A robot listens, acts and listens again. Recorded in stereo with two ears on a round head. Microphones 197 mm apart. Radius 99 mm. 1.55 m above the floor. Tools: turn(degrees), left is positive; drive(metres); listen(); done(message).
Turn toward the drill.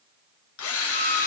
turn(degrees=90)
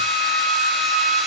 listen()
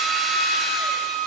listen()
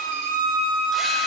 done("Facing where the drill came from. I can't hear it now.")